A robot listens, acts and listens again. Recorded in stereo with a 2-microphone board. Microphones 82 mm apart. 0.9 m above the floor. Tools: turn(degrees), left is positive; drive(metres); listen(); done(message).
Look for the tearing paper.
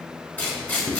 turn(degrees=20)
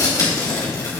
turn(degrees=140)
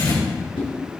turn(degrees=55)
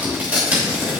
turn(degrees=-15)
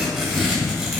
done("Facing the tearing paper.")